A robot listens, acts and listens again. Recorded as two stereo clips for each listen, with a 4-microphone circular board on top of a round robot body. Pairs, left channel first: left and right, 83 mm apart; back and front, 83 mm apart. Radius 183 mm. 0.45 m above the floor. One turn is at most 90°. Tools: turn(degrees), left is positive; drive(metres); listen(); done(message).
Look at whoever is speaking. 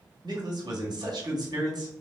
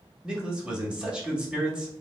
turn(degrees=-80)
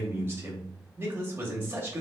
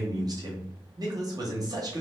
turn(degrees=-30)
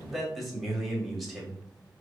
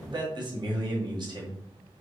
done("Found it: a man speaking, straight ahead, 1 to 2 m away.")